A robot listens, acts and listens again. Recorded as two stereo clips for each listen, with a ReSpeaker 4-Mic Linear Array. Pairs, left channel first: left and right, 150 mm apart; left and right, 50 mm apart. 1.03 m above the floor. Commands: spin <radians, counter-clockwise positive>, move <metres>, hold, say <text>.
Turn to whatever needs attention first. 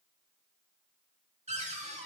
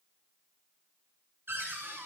hold
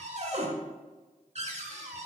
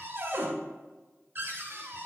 hold
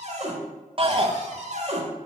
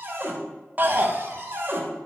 spin -0.70
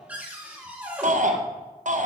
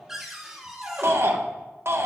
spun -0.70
spin -1.57
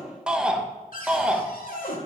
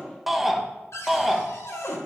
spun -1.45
say Facing the shout, 1 to 2 m away.